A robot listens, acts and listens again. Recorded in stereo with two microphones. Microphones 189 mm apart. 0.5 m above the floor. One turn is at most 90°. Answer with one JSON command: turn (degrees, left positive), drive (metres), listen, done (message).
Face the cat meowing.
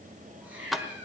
{"turn": -30}
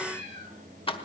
{"turn": -90}
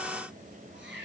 {"turn": -75}
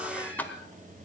{"listen": true}
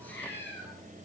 {"turn": 10}
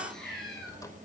{"done": "Facing the cat meowing, over 4 m away."}